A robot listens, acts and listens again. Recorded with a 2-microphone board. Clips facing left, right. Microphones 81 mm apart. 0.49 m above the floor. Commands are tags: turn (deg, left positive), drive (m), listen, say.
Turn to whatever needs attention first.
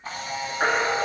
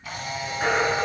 <turn deg="55"/>
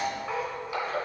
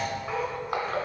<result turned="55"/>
<listen/>
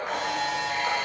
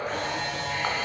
<listen/>
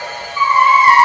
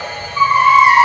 <say>Found it: a baby crying, straight ahead, 1 to 2 m away.</say>